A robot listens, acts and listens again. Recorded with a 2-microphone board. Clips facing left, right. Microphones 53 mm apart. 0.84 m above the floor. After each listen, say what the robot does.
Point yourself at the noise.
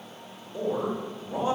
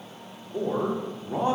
Turn 55° right.
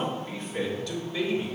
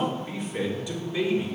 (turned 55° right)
Turn 20° right.
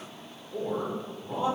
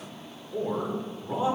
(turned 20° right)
Turn 15° right.
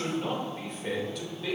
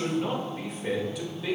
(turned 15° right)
Found it: a man speaking, straight ahead.